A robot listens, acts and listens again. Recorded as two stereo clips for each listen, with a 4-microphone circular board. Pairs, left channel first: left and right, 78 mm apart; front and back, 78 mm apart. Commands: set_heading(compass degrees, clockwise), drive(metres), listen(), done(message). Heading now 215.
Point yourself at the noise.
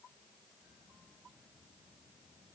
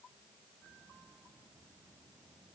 listen()
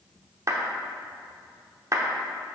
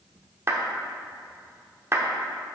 set_heading(345)
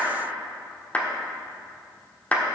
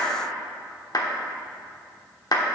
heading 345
set_heading(325)
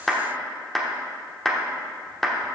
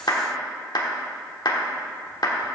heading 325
done("Facing the clap, 1 to 2 m away.")